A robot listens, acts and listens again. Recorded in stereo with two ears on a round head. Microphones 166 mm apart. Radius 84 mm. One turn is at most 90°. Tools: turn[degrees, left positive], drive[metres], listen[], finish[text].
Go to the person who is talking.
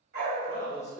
Thought: The man speaking: about 20° left or 160° left.
Action: turn[20]
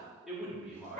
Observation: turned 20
Action: drive[1.0]
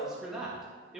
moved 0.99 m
Action: drive[1.0]
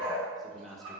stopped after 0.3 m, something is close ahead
Action: finish[Arrived at the man speaking, straight ahead.]